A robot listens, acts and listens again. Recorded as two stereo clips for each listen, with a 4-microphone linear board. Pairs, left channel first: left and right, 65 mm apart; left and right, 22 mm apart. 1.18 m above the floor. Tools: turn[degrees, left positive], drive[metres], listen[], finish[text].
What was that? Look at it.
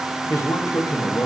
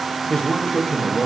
Thought: The man speaking: about 60° left or 120° left.
Action: turn[60]
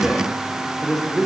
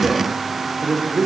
Thought: So it is at 10° left.
Action: turn[10]
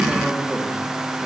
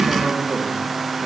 Action: listen[]
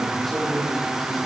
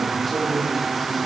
Action: finish[Facing the man speaking.]